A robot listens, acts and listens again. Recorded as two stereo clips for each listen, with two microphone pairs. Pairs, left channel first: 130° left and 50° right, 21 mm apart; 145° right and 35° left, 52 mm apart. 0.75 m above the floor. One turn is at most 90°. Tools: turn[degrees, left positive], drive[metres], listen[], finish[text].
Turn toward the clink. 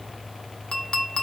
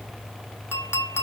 Thought: The clink: 175° left.
Action: turn[90]
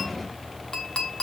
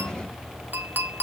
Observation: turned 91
Thought: The clink is now 80° left.
Action: turn[80]
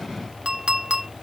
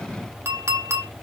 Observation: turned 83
Action: finish[Found it: a clink, straight ahead.]